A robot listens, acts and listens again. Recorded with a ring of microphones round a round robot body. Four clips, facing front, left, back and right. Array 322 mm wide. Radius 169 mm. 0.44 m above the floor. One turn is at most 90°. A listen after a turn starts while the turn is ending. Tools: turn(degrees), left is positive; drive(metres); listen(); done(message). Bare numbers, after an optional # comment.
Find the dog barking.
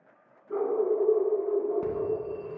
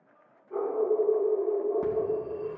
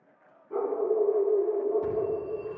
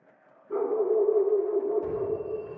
# The dog barking: 55° right.
turn(-55)
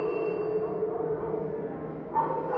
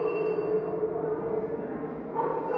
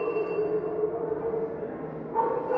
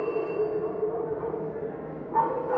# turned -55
# The dog barking is now 75° right.
turn(-75)
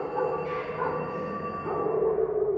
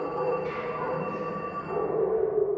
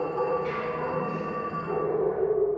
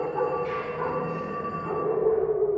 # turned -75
# The dog barking is now 30° right.
turn(-30)
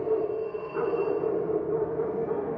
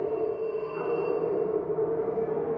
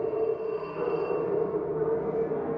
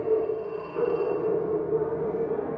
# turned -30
# The dog barking is now 10° left.
turn(10)
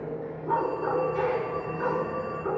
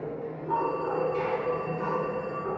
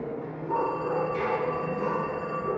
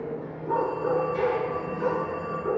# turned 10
done("Facing the dog barking, 1 to 2 m away.")